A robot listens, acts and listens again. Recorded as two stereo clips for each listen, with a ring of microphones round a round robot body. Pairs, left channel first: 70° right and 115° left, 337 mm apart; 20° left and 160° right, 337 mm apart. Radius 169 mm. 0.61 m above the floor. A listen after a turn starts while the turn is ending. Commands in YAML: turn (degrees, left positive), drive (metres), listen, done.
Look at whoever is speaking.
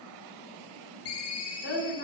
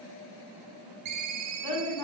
turn: -10
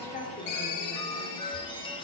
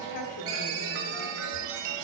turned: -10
listen: true
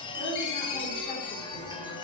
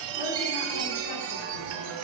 listen: true
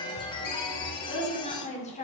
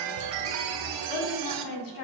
done: "Facing the woman speaking."